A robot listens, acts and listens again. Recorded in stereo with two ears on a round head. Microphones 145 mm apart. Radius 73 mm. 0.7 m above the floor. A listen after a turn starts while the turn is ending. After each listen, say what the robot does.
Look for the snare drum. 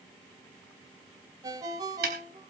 Turn 65° right.
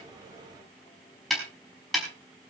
Facing the snare drum.